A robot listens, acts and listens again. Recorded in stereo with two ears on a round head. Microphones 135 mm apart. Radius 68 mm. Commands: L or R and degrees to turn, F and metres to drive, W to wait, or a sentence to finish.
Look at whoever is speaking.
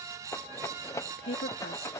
L90
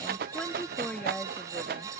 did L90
L10
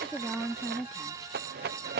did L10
Found it: a woman speaking, straight ahead.